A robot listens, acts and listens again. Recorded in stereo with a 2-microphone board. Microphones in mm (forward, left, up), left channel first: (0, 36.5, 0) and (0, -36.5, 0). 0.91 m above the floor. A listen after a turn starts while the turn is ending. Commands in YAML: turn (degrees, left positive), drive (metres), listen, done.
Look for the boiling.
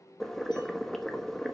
turn: 30
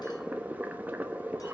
turn: -25
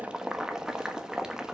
turn: -10
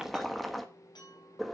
done: "Found it: boiling, straight ahead, 1 to 2 m away."